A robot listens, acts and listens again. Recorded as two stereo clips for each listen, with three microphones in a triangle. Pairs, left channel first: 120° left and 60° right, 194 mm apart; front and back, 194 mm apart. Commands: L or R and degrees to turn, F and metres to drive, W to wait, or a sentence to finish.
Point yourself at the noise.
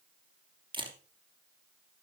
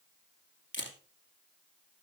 Found it: a camera shutter, straight ahead, 2 to 4 m away.